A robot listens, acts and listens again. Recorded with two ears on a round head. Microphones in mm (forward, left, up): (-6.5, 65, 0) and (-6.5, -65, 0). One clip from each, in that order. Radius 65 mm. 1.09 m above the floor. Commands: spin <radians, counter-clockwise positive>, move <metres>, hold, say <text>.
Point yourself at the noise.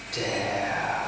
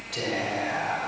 spin 0.52
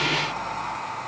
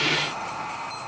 spin 2.71
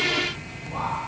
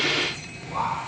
spin -0.52
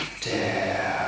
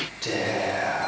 say Facing the whispering, over 4 m away.